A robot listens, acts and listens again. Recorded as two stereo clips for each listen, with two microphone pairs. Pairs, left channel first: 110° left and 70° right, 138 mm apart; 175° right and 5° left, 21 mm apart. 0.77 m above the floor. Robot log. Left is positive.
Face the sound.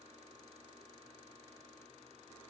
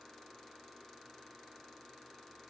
cmd idle
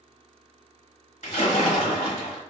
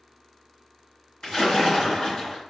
note: The splash: 130° left.
cmd yaw +130
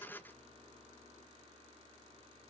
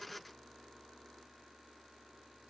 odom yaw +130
end: I heard a splash from this way, but can't make it out now.